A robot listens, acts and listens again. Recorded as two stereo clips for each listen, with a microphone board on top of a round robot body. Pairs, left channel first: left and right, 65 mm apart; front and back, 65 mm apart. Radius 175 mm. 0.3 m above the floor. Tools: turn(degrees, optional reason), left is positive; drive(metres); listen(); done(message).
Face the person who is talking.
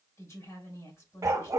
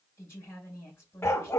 turn(degrees=50, reason="The woman speaking: 50° left.")
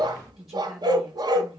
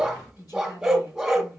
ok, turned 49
done("Found it: a woman speaking, straight ahead.")